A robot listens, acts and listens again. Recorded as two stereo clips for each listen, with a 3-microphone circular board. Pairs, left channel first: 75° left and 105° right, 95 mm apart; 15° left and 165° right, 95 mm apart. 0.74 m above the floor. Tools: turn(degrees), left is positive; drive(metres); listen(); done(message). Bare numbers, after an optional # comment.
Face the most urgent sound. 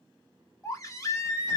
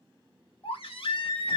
# The baby crying: 20° left.
turn(20)
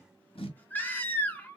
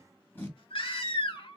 done("Found it: a baby crying, straight ahead, 1 to 2 m away.")